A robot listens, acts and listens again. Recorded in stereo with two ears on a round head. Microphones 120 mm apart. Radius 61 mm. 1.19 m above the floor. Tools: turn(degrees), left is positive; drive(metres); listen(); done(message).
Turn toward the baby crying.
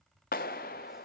listen()
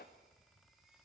listen()
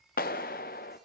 done("I can't make out a baby crying to turn to.")